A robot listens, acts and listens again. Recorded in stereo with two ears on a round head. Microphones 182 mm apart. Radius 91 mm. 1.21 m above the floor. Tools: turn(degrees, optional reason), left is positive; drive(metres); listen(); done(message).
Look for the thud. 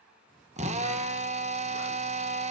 listen()
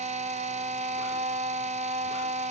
listen()
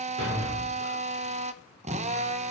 turn(degrees=-60, reason="The thud: about 60° right or 120° right.")
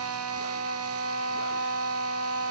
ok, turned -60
listen()
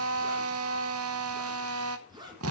done("I heard a thud, but can't make it out now. It was about straight ahead or 60° right.")